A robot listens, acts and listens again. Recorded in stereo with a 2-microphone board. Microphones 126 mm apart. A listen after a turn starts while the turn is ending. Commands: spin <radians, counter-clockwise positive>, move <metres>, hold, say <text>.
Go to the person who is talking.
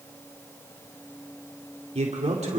spin -0.96
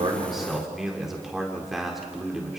move 1.0
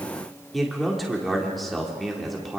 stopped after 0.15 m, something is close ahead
say Blocked. The man speaking is further on, straight ahead.